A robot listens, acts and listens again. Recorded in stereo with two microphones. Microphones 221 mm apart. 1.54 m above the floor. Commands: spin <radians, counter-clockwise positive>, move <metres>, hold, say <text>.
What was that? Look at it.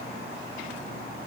hold
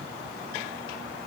hold
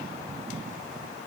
say I can't make out anything.